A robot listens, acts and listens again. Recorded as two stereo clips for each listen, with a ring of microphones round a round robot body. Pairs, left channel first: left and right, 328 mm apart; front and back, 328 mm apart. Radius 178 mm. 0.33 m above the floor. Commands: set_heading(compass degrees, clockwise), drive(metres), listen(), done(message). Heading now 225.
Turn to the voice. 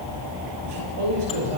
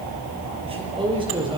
set_heading(330)
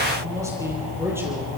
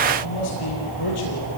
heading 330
done("Facing the man speaking.")